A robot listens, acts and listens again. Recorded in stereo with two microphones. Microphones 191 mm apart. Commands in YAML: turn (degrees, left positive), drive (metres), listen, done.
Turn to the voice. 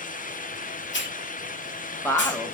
turn: 30
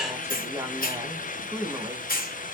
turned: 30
turn: -15
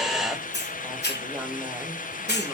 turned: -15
listen: true
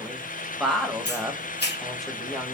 done: "Facing the woman speaking."